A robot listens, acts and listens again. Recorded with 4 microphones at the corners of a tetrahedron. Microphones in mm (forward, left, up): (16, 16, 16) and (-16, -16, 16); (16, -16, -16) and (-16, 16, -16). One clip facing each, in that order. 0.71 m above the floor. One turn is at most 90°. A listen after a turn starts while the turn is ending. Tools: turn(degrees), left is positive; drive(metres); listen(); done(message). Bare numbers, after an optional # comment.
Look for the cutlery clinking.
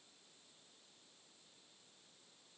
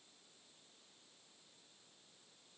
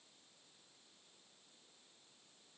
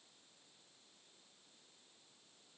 listen()
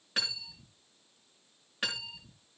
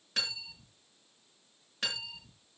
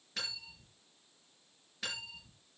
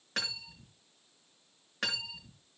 # The cutlery clinking: 120° left.
turn(90)
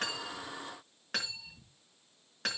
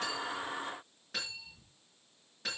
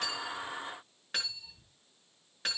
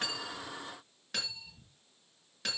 # The cutlery clinking is now 25° left.
turn(25)
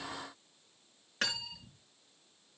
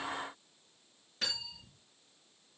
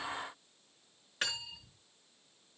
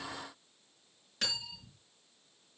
# The cutlery clinking is now 20° left.
turn(20)
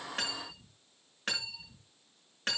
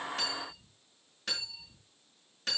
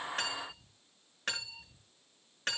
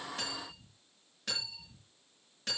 done("Facing the cutlery clinking, over 4 m away.")